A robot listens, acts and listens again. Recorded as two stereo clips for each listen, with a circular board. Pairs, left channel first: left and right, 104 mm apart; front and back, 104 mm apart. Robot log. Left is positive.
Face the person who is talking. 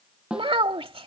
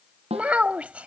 note: The child speaking: 105° right.
cmd yaw -105
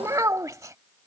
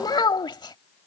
note: The child speaking is now 35° right.
cmd yaw -35
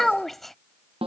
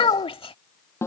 end: Found it: a child speaking, straight ahead.